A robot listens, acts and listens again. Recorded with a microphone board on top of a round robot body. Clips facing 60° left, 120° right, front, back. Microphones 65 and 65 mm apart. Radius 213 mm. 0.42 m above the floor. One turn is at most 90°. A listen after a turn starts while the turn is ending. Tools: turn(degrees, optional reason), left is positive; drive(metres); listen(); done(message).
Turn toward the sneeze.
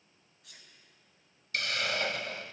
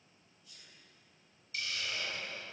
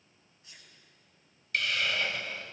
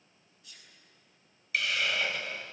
turn(degrees=60, reason="The sneeze: 60° left.")
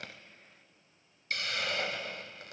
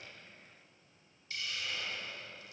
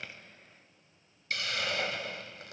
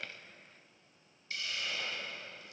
done("Facing where the sneeze came from. I can't hear it now.")